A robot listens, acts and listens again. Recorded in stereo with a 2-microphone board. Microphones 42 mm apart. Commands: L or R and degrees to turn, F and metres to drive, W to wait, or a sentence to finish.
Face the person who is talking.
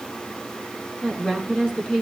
L20
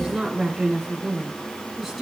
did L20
Found it: a woman speaking, straight ahead, over 4 m away.